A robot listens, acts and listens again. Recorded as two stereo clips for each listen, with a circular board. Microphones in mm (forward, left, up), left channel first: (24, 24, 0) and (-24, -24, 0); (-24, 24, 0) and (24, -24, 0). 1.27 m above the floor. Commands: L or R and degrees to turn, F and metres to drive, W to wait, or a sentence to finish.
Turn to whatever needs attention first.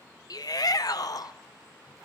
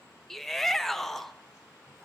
L50
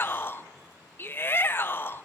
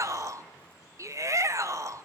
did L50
R10
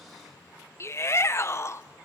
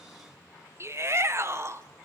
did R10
Found it: a shout, straight ahead, 1 to 2 m away.